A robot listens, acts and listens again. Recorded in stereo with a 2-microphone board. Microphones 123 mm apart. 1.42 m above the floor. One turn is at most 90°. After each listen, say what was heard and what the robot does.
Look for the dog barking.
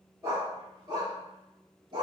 The dog barking: about 40° right or 140° right. Turn 40° right.
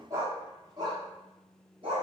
The dog barking: about 45° right or 135° right. Turn 45° right.
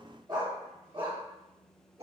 So it is at 50° right. Turn 50° right.
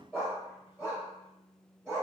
The dog barking is now 15° right. Turn 15° right.
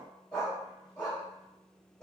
Found it: a dog barking, straight ahead.